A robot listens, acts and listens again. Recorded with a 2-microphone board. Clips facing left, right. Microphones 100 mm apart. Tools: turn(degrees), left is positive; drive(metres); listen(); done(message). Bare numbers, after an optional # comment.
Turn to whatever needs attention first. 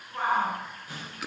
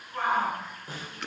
turn(30)
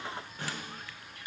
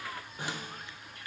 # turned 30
listen()
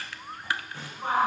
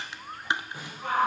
# So it is at 150° left.
turn(150)
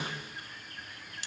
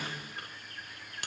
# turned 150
listen()
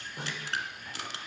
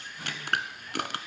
listen()
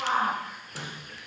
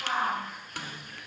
# The shout is now 65° left.
turn(65)
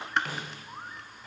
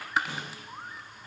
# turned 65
listen()
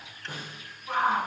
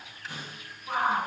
done("Facing the shout, over 4 m away.")